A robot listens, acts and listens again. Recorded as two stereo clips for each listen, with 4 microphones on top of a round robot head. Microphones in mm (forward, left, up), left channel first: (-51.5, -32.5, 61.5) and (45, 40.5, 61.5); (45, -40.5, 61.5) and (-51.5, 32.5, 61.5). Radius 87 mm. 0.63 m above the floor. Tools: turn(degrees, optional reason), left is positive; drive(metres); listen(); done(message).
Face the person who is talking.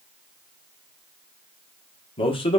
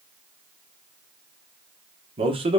turn(degrees=180, reason="The man speaking: straight behind.")
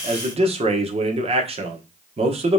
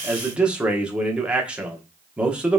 turn(degrees=60, reason="The man speaking is now 60° left.")
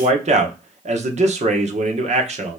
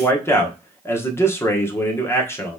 turn(degrees=30, reason="The man speaking is now 30° left.")
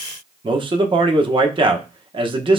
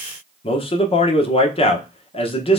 done("Found it: a man speaking, straight ahead.")